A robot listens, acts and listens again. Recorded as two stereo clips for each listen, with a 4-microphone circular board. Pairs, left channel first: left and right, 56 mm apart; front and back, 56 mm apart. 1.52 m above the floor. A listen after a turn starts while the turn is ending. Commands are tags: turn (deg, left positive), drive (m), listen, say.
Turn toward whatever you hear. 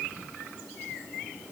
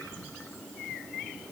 <listen/>
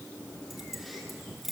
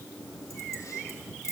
<say>Facing the keys jangling, 2 to 4 m away.</say>